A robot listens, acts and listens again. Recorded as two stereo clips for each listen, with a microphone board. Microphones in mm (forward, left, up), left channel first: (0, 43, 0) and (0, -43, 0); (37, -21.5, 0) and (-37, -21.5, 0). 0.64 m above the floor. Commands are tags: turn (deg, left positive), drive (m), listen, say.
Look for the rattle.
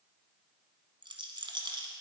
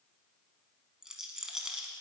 <turn deg="-100"/>
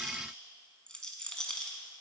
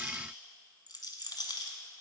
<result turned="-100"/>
<turn deg="10"/>
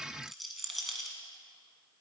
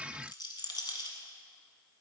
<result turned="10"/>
<say>Found it: a rattle, straight ahead.</say>